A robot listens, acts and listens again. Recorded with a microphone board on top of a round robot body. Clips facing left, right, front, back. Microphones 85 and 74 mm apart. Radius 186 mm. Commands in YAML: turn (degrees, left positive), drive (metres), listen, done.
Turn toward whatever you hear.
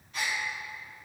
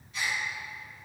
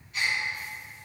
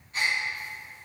turn: 125
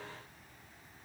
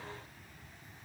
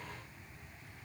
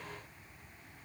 done: "I heard a gasp from this way, but can't make it out now."